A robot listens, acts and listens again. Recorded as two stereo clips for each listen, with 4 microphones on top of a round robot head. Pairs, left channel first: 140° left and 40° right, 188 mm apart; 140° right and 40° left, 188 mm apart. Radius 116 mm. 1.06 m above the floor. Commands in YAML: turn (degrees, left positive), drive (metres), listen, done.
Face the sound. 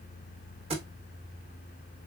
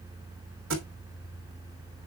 turn: 20
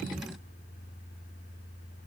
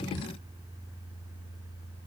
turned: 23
done: "I heard a thud from this way, but can't make it out now."